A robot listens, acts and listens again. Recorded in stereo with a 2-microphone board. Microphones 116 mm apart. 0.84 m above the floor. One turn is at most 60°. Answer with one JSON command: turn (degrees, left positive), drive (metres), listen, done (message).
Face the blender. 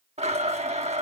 {"turn": -60}
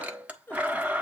{"turn": -10}
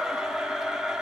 {"done": "Found it: a blender, straight ahead."}